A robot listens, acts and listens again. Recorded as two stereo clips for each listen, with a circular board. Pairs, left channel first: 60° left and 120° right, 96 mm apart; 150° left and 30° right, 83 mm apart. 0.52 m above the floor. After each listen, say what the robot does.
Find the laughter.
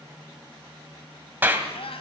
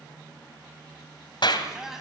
Turn 55° left.
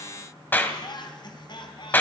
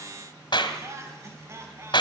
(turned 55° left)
Turn 25° left.
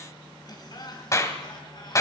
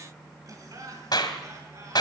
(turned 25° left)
Turn 15° left.
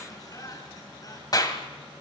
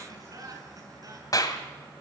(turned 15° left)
Turn 10° left.
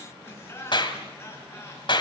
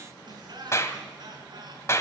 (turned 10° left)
Found it: laughter, straight ahead.